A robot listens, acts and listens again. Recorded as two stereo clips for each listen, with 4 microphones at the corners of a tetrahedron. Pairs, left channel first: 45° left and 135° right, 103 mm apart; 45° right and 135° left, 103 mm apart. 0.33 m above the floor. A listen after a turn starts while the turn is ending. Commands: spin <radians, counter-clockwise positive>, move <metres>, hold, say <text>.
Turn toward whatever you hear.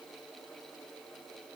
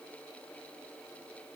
hold
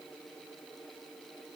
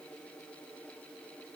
hold
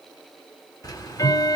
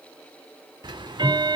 spin 1.66
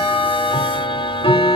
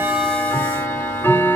spin 0.35
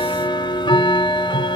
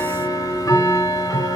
say Found it: ticking, straight ahead, under 1 m away.